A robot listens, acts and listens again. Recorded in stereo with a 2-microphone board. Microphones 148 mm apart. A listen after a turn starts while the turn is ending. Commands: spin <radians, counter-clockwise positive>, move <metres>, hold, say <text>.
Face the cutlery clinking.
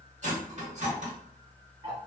spin -0.96
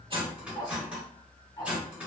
spin -0.17
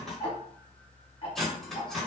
say Found it: cutlery clinking, straight ahead.